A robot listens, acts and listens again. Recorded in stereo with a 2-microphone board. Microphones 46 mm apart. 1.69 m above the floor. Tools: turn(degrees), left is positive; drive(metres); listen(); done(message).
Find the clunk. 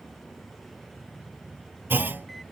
turn(degrees=-50)
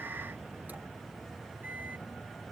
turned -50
listen()
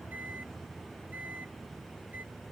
done("I heard a clunk, but can't make it out now. It was about straight ahead or 80° right.")